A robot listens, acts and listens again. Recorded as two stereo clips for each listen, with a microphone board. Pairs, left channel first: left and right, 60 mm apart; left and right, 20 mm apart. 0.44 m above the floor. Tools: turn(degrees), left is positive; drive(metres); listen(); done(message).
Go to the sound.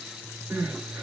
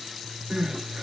turn(degrees=-45)
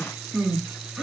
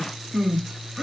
drive(metres=1.0)
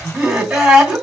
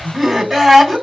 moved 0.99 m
turn(degrees=-15)
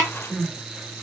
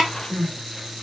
drive(metres=1.0)
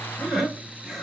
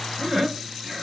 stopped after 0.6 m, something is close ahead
done("I am next to the crying.")